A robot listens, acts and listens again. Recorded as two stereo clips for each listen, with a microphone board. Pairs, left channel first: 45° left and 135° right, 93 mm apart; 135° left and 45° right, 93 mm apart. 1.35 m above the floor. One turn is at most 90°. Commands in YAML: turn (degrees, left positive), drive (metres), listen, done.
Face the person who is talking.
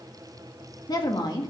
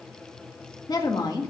turn: 90
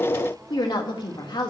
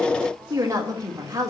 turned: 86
done: "Found it: a woman speaking, straight ahead, 1 to 2 m away."